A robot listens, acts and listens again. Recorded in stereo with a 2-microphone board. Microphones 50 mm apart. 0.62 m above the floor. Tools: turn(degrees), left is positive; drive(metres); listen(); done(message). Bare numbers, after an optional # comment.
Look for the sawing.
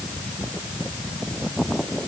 listen()
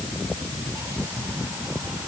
listen()
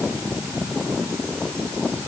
done("I can't make out sawing to turn to.")